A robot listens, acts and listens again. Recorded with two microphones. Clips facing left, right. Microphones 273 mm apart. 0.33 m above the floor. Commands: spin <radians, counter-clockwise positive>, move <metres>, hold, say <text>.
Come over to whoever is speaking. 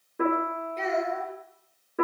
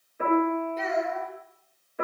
spin -0.52
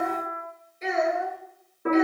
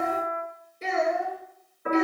spin -2.53
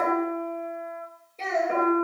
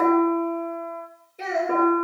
spin -0.17
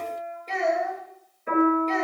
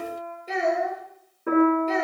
move 1.0
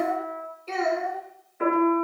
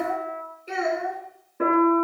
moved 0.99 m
spin -0.26
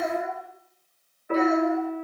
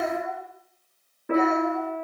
move 1.0
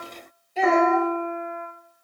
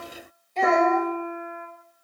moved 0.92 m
move 1.0
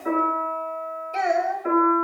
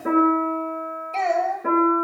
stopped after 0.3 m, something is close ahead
spin 0.26
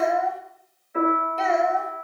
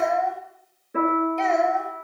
say Arrived at the child speaking, straight ahead.